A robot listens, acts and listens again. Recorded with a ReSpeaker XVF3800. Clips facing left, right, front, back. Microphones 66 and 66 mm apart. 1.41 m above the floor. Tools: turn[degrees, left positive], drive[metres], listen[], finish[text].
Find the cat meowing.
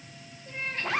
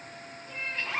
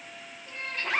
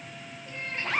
Thought: The cat meowing: 130° left.
Action: turn[130]
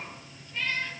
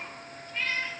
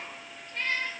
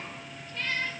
Thought: The cat meowing is now 20° right.
Action: turn[-20]
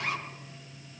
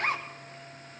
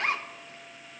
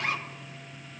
Action: listen[]
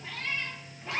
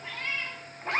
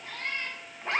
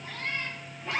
Thought: The cat meowing is now 10° left.
Action: turn[10]
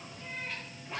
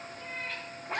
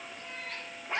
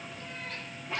Action: listen[]
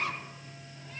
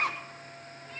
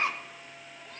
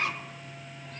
Action: listen[]
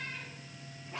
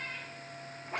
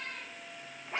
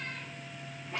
Action: finish[Facing where the cat meowing came from. I can't hear it now.]